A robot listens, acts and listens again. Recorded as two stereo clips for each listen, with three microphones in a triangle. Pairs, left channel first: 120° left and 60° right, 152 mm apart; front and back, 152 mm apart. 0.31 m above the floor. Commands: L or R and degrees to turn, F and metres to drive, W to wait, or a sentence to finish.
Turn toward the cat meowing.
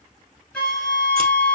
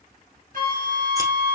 W
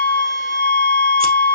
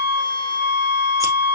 W
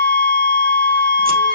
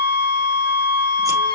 I can't make out a cat meowing to turn to.